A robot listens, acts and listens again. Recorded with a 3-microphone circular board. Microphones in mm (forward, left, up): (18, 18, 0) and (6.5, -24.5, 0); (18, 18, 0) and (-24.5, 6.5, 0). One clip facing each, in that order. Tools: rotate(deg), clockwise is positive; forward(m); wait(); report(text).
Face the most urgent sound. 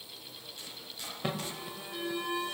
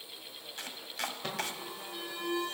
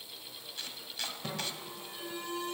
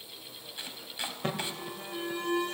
rotate(-150)
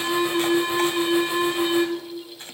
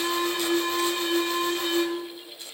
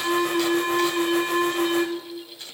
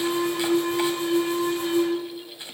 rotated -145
report("Facing the alarm.")